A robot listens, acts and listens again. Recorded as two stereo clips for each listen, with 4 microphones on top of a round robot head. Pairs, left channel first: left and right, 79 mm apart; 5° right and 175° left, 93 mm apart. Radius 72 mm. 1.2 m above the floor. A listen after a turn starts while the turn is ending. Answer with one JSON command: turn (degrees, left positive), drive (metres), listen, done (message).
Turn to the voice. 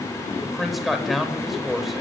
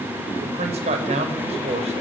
{"turn": 180}
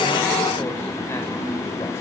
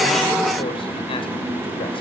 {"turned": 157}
{"turn": 25}
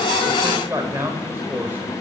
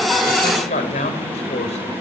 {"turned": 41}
{"turn": -20}
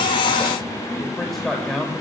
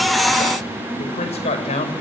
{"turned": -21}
{"done": "Facing the man speaking."}